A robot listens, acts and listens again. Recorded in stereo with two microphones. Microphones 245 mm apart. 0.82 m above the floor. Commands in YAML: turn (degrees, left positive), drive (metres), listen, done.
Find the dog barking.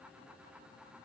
listen: true
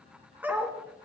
turn: -30
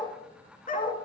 turn: 35
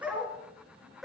done: "Facing the dog barking."